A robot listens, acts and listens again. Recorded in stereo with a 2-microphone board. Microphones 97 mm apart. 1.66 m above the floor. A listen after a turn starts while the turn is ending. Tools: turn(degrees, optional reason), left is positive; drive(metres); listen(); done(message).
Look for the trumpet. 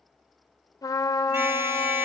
turn(degrees=40, reason="The trumpet: about 40° left or 140° left.")
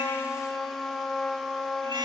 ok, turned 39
done("Found it: a trumpet, straight ahead, 1 to 2 m away.")